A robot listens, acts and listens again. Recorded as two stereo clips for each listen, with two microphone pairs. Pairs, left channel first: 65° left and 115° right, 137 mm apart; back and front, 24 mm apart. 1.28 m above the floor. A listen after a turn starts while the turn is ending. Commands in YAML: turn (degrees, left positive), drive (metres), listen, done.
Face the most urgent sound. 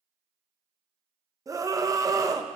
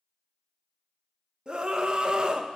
turn: -50
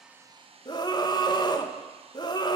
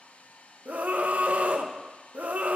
done: "Facing the scream, under 1 m away."